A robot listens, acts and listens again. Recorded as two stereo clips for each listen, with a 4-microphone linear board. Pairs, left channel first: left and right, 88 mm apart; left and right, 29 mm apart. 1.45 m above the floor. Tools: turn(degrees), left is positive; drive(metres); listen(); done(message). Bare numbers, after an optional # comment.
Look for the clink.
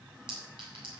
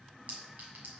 # The clink: about 65° right or 115° right.
turn(-65)
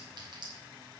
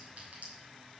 # So it is at 50° right.
turn(-50)
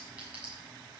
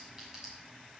# The clink is now 15° right.
turn(-15)
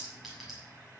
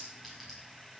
listen()
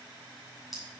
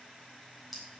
done("Found it: a clink, straight ahead.")